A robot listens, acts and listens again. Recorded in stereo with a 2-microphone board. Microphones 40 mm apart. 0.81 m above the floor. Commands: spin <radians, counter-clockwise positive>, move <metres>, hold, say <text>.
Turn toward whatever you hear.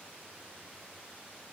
hold
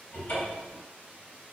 spin 1.05
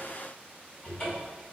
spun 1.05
spin 0.61
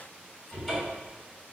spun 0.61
spin 0.17
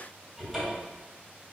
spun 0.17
say Found it: a cupboard door, straight ahead, 1 to 2 m away.